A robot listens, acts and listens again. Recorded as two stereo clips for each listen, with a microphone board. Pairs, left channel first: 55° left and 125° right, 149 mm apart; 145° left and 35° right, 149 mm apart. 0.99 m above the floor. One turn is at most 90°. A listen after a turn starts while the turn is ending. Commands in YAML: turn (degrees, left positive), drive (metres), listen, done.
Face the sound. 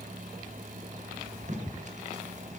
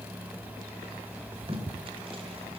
turn: -90
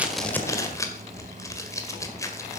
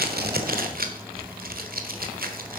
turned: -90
turn: -15
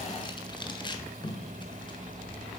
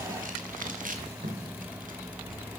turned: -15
done: "Found it: tape being pulled, straight ahead, 1 to 2 m away."